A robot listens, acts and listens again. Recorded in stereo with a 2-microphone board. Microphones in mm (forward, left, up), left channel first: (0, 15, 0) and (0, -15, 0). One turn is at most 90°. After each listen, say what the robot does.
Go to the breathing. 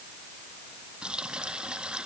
Keep listening.
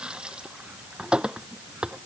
Keep listening.
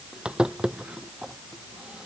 I can't make out breathing, only a running tap.